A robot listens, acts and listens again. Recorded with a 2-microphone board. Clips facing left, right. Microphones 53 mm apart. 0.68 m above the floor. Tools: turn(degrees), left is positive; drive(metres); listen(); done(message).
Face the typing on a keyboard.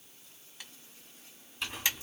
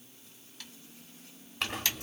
turn(degrees=15)
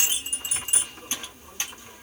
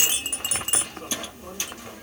listen()
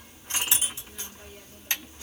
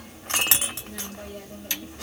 turn(degrees=150)
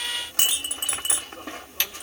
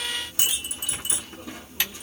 turn(degrees=-10)
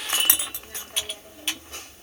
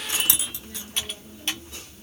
done("Found it: typing on a keyboard, straight ahead, 1 to 2 m away.")